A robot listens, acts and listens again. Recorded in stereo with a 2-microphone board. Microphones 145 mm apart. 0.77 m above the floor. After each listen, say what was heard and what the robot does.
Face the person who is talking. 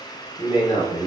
The man speaking: about 40° left or 140° left. Turn 40° left.
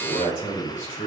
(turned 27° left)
So it is at 105° left. Turn 105° left.
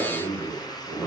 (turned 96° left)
Facing the man speaking.